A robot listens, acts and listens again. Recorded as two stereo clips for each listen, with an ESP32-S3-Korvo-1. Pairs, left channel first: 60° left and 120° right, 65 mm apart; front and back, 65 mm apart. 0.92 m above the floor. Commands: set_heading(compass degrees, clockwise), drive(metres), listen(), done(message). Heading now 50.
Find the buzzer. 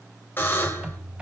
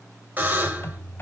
set_heading(290)
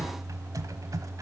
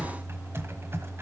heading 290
listen()
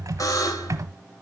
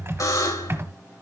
set_heading(260)
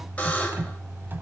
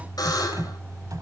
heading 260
set_heading(270)
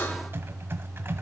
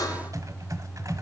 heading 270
done("Found it: a buzzer, straight ahead, 2 to 4 m away.")